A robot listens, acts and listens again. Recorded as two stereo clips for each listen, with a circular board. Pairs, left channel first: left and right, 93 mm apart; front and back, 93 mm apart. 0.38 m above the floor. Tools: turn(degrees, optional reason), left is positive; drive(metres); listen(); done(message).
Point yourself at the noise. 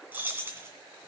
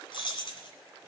turn(degrees=-25, reason="The keys jangling: 25° right.")
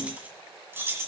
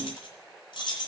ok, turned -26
turn(degrees=-30, reason="The keys jangling is now 30° right.")
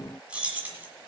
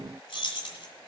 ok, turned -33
turn(degrees=-20, reason="The keys jangling is now 20° right.")
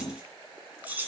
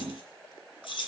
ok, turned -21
turn(degrees=-20, reason="The keys jangling is now 20° right.")
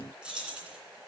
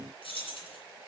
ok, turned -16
turn(degrees=-10, reason="The keys jangling is now 10° right.")
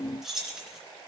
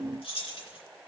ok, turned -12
done("Found it: keys jangling, straight ahead.")